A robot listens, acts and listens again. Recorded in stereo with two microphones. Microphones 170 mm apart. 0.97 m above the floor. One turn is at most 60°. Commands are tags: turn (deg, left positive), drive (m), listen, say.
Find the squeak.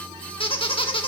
<turn deg="30"/>
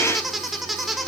<say>Found it: a squeak, straight ahead.</say>